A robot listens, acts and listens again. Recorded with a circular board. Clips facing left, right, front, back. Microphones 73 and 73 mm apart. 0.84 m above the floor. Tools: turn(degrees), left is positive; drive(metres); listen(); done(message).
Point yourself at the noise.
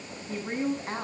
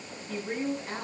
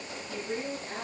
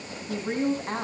turn(degrees=145)
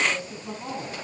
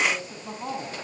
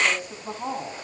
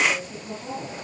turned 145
turn(degrees=-25)
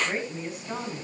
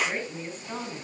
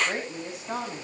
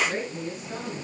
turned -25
done("Found it: a woman speaking, straight ahead, over 4 m away.")